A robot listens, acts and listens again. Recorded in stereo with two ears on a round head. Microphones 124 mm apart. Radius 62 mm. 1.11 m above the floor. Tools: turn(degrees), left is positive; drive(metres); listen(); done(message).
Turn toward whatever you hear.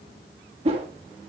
turn(degrees=-45)
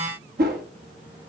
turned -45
turn(degrees=-90)
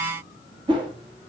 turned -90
turn(degrees=-35)
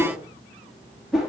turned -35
done("Facing the whoosh, 1 to 2 m away.")